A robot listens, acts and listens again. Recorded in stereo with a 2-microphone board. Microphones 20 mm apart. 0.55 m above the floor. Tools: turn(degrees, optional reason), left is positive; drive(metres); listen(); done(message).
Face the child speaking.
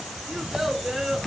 listen()
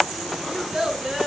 turn(degrees=-35, reason="The child speaking: about 35° right or 145° right.")
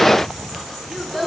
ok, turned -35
done("Facing the child speaking.")